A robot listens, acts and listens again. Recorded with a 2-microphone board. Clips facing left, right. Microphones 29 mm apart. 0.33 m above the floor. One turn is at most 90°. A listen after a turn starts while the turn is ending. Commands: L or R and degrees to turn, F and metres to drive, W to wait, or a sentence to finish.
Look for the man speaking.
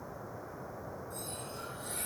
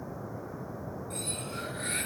W
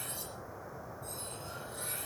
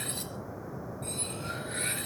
W
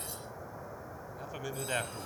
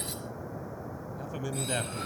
L30
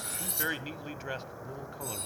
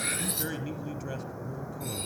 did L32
L90
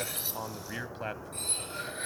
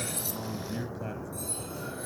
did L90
L45
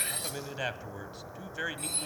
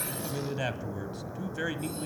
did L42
Found it: a man speaking, straight ahead.